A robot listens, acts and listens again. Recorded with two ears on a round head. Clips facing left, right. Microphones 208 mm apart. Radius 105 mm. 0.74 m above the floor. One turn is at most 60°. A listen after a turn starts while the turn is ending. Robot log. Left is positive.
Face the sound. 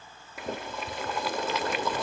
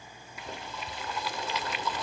note: The boiling: about 45° left or 135° left.
cmd yaw +45
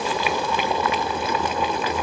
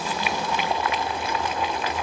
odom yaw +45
note: So it is at 90° left.
cmd yaw +60
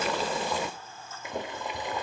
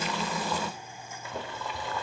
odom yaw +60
note: The boiling is now 15° left.
cmd yaw +15
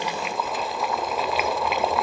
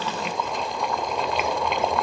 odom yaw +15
end: Found it: boiling, straight ahead.